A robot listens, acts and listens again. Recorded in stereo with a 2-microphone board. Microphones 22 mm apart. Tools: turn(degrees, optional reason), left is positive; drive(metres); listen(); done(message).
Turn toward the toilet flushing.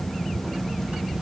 listen()
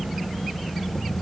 listen()
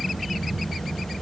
done("I can't make out a toilet flushing to turn to.")